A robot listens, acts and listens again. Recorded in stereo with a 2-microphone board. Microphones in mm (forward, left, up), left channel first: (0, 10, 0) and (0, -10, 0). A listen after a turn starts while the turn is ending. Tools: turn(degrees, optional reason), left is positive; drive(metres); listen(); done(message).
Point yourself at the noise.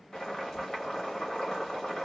turn(degrees=40, reason="The boiling: about 40° left or 140° left.")
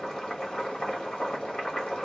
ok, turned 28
turn(degrees=110, reason="So it is at 110° left.")
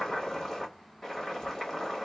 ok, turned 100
turn(degrees=10, reason="The boiling is now 10° left.")
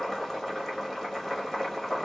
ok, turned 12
done("Facing the boiling, 1 to 2 m away.")